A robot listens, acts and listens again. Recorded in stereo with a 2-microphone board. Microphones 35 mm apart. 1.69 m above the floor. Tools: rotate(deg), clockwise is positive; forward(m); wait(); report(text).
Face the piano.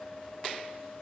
wait()
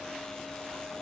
wait()
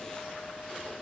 report("I can't make out a piano.")